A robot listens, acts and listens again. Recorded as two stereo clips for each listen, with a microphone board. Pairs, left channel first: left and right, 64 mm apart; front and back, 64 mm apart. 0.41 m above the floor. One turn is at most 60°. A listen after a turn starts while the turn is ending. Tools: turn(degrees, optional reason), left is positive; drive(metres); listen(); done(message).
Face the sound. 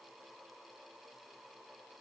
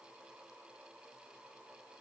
listen()
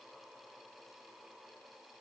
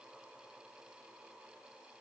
listen()
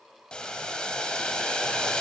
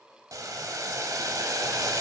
turn(degrees=60, reason="The boiling: 165° left.")
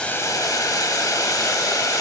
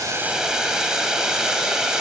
turn(degrees=60, reason="The boiling is now 100° left.")
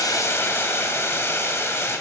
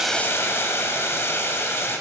turn(degrees=45, reason="The boiling is now 45° left.")
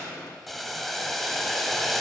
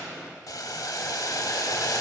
done("Facing the boiling.")